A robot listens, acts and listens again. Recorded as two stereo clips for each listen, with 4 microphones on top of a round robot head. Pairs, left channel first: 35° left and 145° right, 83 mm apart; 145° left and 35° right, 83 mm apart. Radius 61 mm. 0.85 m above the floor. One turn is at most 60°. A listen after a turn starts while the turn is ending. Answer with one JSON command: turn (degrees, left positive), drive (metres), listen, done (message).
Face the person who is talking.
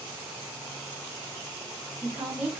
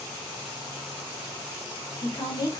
{"turn": 60}
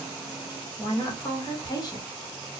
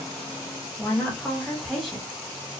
{"turn": 55}
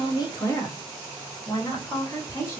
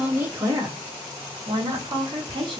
{"turn": -20}
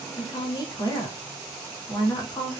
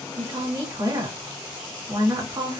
{"done": "Found it: a woman speaking, straight ahead, 1 to 2 m away."}